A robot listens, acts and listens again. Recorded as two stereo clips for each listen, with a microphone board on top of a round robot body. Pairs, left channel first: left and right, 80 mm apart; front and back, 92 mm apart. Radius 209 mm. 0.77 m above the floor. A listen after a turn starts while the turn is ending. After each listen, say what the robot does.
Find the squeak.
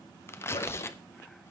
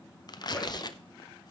Turn 85° left.
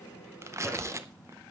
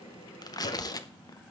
Turn 10° left.
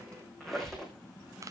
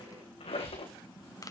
Found it: a squeak, straight ahead, over 4 m away.